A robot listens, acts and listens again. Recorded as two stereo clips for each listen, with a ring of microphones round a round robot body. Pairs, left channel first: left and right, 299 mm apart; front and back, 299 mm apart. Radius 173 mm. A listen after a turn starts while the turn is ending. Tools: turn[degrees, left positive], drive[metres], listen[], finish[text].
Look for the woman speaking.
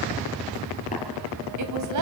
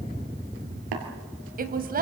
Thought: The woman speaking: 120° right.
Action: turn[-120]
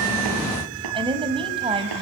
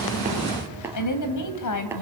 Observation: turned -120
Thought: The woman speaking is now 15° right.
Action: turn[-15]
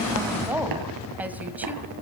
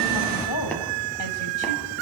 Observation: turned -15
Action: finish[Found it: a woman speaking, straight ahead, 2 to 4 m away.]